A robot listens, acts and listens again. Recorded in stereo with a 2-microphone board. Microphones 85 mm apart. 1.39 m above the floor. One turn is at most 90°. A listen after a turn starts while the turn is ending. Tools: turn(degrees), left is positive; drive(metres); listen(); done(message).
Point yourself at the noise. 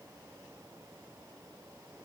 listen()
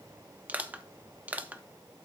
turn(degrees=-20)
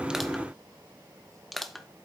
done("Found it: crushing, straight ahead, under 1 m away.")